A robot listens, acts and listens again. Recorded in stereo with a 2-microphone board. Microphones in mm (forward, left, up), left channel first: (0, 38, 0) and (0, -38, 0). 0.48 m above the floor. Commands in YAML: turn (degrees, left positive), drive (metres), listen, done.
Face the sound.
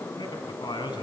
turn: 90
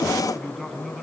done: "Found it: a man speaking, straight ahead."